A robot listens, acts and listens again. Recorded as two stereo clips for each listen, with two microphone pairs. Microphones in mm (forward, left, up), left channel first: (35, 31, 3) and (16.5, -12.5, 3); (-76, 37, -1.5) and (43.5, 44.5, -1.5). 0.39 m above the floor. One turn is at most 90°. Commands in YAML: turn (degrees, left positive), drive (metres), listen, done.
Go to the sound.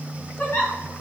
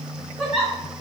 turn: 90
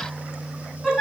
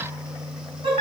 turn: -15
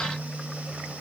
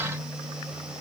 listen: true
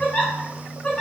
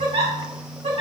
drive: 1.0
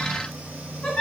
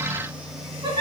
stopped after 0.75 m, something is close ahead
turn: 10
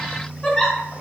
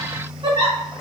done: "Arrived at the giggle, straight ahead."